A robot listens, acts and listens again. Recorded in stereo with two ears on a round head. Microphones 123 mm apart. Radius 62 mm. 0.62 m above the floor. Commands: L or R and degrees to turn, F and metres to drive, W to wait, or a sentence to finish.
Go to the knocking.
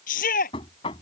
L40
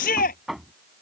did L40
F1.0
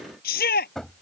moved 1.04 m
F1.0
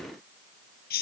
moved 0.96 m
W
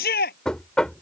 F1.0
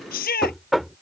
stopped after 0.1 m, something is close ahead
Arrived at the knocking, straight ahead.